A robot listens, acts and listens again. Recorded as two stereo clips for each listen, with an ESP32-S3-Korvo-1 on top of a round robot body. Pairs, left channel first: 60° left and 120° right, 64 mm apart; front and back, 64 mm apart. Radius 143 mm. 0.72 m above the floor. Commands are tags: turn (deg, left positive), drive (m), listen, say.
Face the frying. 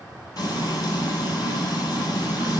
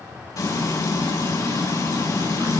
<turn deg="35"/>
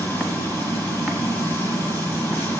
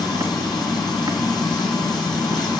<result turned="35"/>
<say>Found it: frying, straight ahead, over 4 m away.</say>